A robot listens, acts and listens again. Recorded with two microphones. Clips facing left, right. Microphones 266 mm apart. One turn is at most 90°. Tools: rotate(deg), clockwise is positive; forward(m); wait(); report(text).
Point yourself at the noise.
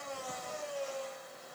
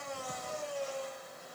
wait()
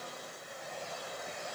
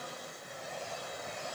wait()
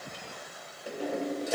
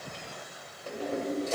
rotate(-30)
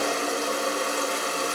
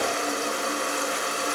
rotate(-90)
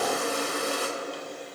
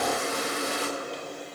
rotate(-55)
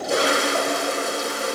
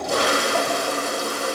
rotate(-25)
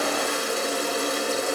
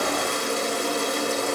report("Found it: a toilet flushing, straight ahead.")